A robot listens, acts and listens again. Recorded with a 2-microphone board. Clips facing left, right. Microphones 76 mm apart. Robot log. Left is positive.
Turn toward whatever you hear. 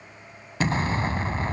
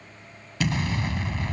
note: The explosion: about 35° left or 145° left.
cmd yaw +35
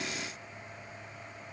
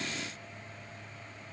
cmd idle
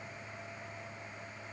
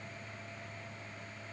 end: I heard an explosion, but can't make it out now. It was about straight ahead or 110° left.